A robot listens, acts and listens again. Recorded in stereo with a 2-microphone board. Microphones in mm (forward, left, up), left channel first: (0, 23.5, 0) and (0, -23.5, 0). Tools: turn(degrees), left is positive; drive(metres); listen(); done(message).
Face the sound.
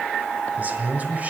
turn(degrees=-35)
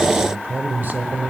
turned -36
turn(degrees=-40)
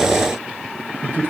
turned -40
turn(degrees=-130)
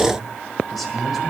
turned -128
done("Found it: a man speaking, straight ahead.")